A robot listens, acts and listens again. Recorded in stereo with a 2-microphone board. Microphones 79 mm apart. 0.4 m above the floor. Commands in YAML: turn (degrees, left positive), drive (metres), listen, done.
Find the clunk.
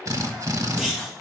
turn: -30
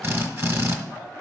listen: true
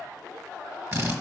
done: "I heard a clunk, but can't make it out now. It was about 20° left or 140° right."